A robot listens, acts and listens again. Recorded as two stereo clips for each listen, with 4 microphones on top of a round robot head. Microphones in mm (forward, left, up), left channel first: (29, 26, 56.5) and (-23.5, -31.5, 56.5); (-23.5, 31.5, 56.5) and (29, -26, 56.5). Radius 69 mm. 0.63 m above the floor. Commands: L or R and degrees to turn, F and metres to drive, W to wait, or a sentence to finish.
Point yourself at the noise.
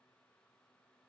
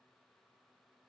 W
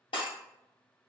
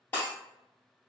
L65
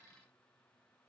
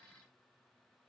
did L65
Facing where the breaking glass came from. I can't hear it now.